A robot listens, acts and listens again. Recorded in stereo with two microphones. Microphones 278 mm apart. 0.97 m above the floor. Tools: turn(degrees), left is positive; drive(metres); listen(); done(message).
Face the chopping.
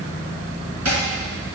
turn(degrees=-70)
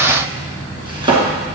turn(degrees=-20)
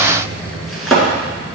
done("Facing the chopping, 2 to 4 m away.")